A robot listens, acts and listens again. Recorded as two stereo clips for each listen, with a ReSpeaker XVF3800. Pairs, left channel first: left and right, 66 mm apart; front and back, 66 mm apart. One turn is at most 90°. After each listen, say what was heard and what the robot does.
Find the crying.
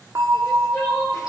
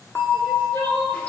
The crying: 40° left. Turn 40° left.
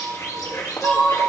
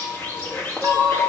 The crying is now 25° left. Turn 25° left.
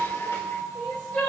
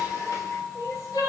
Found it: crying, straight ahead, 2 to 4 m away.